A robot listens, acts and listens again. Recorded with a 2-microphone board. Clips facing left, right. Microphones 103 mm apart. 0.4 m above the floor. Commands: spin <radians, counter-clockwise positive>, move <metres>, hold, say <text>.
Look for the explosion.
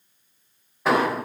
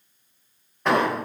spin 0.52
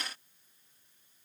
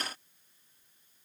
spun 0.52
hold
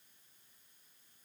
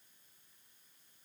say I heard an explosion, but can't make it out now. It was about 25° right or 145° left.